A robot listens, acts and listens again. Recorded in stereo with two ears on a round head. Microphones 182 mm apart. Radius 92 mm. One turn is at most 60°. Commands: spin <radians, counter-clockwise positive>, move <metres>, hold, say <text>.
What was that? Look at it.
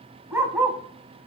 spin -0.52
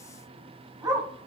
spin -0.26
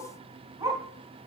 spin -0.35
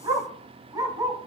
spin -0.35
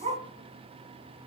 spin -1.05
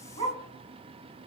spin -1.05
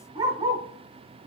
spin -0.44
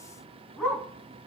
say Found it: a dog barking, straight ahead, 2 to 4 m away.